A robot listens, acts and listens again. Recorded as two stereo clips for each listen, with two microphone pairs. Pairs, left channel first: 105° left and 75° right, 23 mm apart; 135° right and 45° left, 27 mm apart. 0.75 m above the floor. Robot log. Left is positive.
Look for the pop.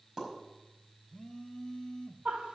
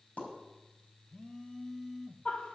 note: The pop: 150° right.
cmd yaw -150
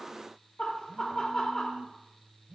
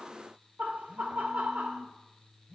end: I heard a pop from this way, but can't make it out now.